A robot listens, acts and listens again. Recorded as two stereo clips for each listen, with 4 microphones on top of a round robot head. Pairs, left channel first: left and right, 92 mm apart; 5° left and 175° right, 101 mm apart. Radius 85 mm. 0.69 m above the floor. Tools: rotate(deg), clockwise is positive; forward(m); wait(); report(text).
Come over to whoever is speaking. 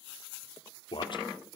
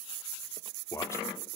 rotate(-65)
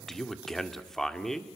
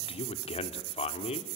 forward(1.0)
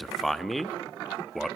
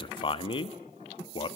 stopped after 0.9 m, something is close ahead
report("I am next to the man speaking.")